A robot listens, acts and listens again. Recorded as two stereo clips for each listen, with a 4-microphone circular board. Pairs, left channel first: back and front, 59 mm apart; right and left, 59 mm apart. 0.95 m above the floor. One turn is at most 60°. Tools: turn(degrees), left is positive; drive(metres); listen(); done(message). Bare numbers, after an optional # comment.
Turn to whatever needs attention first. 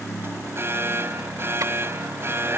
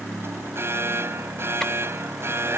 # The alarm: 45° left.
turn(45)
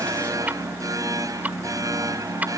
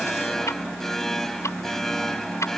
done("Found it: an alarm, straight ahead.")